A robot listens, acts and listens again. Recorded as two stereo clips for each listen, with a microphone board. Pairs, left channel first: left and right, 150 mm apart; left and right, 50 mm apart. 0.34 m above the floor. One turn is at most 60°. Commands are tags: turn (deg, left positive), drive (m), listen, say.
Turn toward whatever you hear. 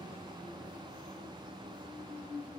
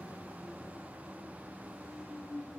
<listen/>
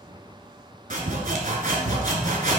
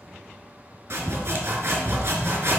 <turn deg="-60"/>
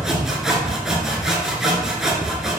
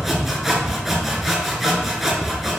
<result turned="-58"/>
<say>Facing the sawing.</say>